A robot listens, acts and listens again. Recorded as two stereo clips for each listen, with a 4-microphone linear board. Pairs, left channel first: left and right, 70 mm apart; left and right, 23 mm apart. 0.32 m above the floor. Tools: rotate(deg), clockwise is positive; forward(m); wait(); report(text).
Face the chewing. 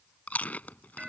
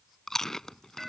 rotate(-20)
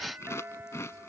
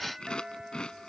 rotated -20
rotate(-140)
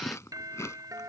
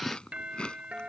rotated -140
rotate(-45)
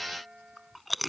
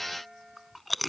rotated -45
report("Facing the chewing.")